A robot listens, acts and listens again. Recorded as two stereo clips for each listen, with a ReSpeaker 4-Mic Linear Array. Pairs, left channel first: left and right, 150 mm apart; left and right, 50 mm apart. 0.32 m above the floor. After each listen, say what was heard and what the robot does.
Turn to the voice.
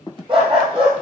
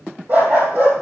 Keep listening.
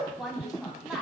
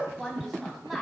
Turn 30° right.
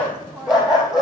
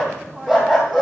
So it is at 145° right. Turn 145° right.
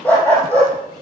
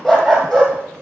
Keep listening.
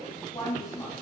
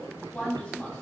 The woman speaking is now 30° left. Turn 30° left.
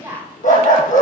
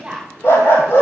The woman speaking is now 20° right. Turn 20° right.
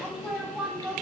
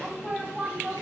Found it: a woman speaking, straight ahead, 2 to 4 m away.